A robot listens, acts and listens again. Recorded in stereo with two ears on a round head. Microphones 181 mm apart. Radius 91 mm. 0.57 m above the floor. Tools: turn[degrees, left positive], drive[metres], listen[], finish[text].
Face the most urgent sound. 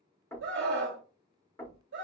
Thought: The scream: about 65° right or 115° right.
Action: turn[-65]
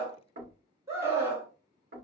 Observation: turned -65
Thought: So it is at 15° right.
Action: turn[-15]
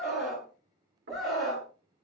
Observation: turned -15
Action: finish[Facing the scream, 1 to 2 m away.]